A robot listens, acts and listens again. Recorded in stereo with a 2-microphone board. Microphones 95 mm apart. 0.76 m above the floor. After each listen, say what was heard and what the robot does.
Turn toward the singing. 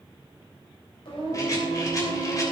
The singing: about 70° left or 110° left. Turn 70° left.
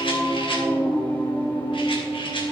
So it is at 30° left. Turn 30° left.
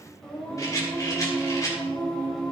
Facing the singing, over 4 m away.